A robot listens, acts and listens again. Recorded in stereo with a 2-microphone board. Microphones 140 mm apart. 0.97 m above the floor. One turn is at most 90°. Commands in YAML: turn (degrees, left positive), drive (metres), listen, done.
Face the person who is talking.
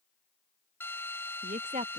turn: -65
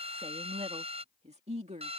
turn: -55
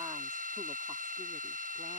listen: true
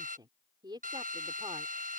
turn: -30
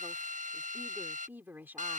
turn: -15
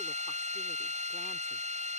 listen: true
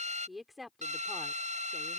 done: "Found it: a woman speaking, straight ahead."